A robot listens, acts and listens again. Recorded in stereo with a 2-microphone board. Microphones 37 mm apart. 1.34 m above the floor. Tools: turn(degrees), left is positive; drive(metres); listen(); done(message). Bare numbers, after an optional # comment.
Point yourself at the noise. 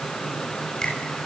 # The finger snap: about 25° left or 155° left.
turn(25)
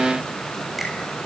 listen()
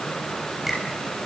listen()
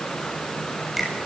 done("Found it: a finger snap, straight ahead, over 4 m away.")